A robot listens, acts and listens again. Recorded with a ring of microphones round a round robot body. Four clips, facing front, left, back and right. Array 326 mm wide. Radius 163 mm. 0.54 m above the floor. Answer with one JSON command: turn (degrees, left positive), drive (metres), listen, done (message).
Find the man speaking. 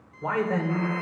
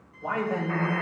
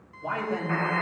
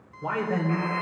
{"turn": -20}
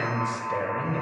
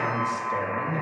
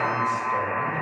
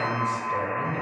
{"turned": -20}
{"done": "Found it: a man speaking, straight ahead, 2 to 4 m away."}